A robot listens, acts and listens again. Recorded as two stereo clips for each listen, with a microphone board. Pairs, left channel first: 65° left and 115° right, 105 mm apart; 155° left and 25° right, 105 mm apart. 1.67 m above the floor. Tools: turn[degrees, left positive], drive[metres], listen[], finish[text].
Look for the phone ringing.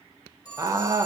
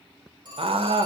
Thought: The phone ringing: 15° left.
Action: turn[15]
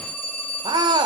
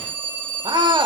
Action: finish[Found it: a phone ringing, straight ahead.]